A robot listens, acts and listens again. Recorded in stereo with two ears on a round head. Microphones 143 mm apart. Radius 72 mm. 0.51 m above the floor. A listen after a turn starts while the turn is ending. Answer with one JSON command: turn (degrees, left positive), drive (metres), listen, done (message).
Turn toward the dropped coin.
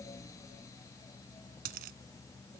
{"turn": -60}
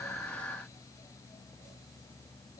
{"listen": true}
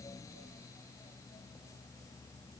{"done": "I heard a dropped coin, but can't make it out now. It was about straight ahead or 60° right."}